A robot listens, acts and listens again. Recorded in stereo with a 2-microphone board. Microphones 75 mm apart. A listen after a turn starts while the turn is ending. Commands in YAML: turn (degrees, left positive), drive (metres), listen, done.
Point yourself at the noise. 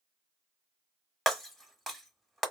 turn: 30
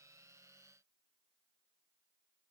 listen: true
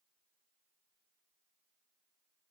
done: "I heard breaking glass, but can't make it out now. It was about 30° right or 150° left."